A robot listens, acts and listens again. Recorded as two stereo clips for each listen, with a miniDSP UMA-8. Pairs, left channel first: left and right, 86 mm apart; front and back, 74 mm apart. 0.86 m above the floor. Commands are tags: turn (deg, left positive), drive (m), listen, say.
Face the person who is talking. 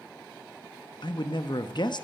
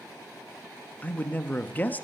<turn deg="65"/>
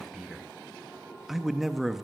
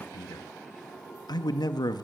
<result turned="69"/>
<say>Facing the man speaking, under 1 m away.</say>